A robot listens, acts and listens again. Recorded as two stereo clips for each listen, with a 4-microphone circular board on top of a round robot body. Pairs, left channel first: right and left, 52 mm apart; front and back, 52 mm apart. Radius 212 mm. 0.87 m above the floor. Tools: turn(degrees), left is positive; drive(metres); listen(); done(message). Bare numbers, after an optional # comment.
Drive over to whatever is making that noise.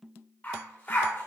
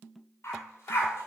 # The dog barking: 35° right.
turn(-35)
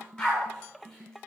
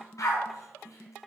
# The dog barking is now 10° right.
turn(-10)
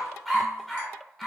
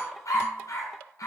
drive(1.0)
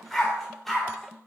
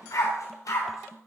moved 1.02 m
drive(1.0)
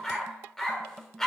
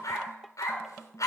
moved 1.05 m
drive(1.0)
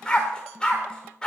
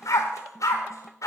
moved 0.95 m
# The dog barking is now 15° right.
turn(-15)
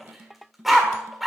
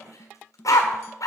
drive(1.0)
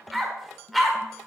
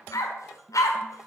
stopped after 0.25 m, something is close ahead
done("Arrived at the dog barking, straight ahead.")